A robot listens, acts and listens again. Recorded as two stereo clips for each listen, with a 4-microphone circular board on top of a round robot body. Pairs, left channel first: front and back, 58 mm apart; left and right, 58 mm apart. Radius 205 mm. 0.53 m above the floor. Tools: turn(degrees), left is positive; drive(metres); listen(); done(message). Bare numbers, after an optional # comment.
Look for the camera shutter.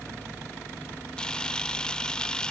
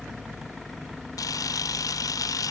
# The camera shutter: 75° left.
turn(75)
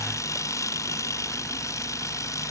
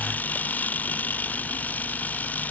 # The camera shutter is now 30° left.
turn(30)
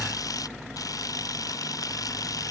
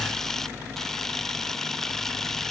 done("Found it: a camera shutter, straight ahead.")